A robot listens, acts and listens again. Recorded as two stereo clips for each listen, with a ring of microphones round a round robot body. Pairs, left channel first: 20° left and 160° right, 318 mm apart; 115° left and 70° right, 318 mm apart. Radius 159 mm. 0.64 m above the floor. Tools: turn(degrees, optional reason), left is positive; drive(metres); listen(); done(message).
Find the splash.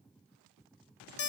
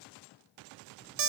listen()
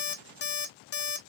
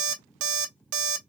listen()
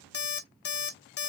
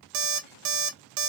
done("I can't make out a splash to turn to.")